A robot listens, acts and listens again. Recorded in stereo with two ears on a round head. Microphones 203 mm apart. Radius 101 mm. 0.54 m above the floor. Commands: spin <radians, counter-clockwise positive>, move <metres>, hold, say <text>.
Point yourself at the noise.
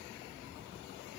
hold
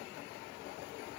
hold
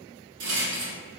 spin -1.57
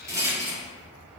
spin -0.26
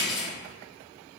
say Facing the rattle.